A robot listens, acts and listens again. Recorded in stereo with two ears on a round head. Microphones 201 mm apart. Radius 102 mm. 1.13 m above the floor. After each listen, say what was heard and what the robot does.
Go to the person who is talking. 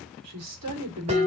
Turn 90° right.
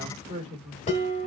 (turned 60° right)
So it is at 30° right. Turn 30° right.
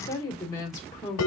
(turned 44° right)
The woman speaking is now 15° left. Turn 15° left.
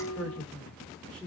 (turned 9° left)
Drive 1.0 m forward.
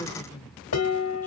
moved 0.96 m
The woman speaking is now 10° left. Turn 10° left.
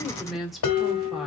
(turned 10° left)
Drive 1.0 m forward.
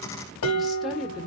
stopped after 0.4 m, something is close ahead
Arrived at the woman speaking, straight ahead.